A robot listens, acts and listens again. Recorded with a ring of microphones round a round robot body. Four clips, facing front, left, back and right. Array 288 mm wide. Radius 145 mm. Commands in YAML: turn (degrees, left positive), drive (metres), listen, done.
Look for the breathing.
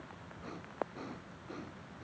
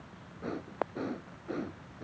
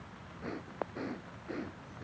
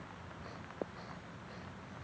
turn: 110
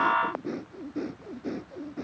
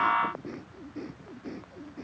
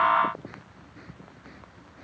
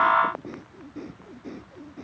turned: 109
done: "Facing the breathing."